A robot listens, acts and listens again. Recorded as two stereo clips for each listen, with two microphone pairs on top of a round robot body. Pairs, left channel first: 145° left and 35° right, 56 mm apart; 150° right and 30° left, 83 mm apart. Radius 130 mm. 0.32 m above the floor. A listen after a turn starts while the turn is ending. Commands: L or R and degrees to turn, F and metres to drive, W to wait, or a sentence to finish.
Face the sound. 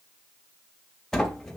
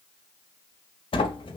R135
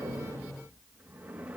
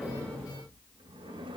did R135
L25
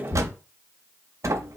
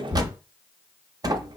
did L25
Found it: a sliding door, straight ahead, under 1 m away.